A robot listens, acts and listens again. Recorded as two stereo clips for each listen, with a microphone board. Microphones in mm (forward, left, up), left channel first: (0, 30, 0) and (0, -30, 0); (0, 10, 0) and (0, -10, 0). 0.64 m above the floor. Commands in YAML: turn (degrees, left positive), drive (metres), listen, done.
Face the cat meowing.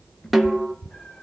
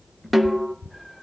turn: 25
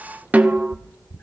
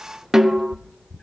turn: 125
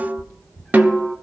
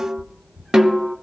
done: "Facing the cat meowing, 2 to 4 m away."